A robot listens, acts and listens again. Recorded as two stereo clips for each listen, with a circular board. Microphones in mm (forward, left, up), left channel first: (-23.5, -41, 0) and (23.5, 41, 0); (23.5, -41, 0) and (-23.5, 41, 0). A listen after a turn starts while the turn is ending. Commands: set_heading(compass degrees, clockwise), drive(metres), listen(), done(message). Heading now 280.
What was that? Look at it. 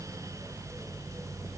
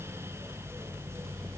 listen()
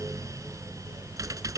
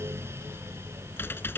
done("Facing the typing on a keyboard.")